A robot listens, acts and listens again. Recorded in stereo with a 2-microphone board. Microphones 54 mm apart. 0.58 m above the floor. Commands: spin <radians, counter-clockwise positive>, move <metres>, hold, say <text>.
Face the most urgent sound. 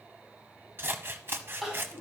spin -0.52
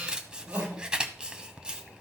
spin -2.44
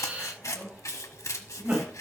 spin -0.44
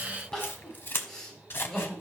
spin 0.17
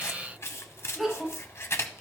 say Found it: crying, straight ahead.